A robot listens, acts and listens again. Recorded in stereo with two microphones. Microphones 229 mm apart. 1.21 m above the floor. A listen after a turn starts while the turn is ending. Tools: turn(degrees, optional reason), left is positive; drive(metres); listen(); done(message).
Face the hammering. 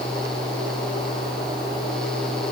listen()
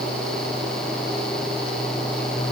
listen()
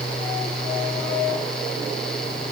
done("I can't make out hammering.")